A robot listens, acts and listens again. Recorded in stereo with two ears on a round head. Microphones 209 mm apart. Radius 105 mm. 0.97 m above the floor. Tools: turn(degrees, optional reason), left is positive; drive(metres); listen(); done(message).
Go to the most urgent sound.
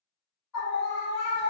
turn(degrees=90)
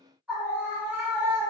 drive(metres=1.0)
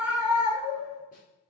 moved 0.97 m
drive(metres=1.0)
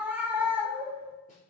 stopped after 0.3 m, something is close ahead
done("I am next to the scream.")